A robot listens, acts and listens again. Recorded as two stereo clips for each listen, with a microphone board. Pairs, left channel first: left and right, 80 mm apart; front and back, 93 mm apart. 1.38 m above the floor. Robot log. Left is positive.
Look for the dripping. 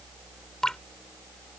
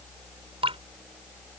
note: The dripping: 175° left.
cmd yaw +175
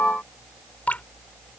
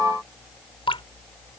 note: The dripping is now 20° left.
cmd yaw +20
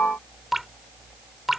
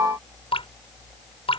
end: Facing the dripping.